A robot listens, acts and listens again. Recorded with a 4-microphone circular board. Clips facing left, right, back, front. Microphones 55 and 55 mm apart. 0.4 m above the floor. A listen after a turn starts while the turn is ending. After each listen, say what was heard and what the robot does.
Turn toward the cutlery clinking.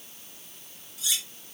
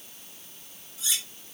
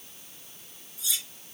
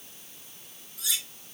The cutlery clinking: 30° right. Turn 30° right.
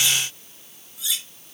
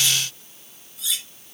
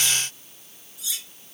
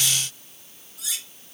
Found it: cutlery clinking, straight ahead.